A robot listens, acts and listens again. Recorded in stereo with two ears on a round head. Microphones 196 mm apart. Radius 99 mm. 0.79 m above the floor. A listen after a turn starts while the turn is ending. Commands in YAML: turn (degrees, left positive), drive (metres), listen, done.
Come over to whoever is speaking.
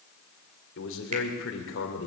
turn: 55
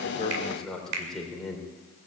drive: 1.0
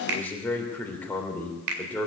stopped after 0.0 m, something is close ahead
turn: 10
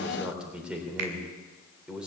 done: "Something is in my way. I am facing the man speaking but have not reached it."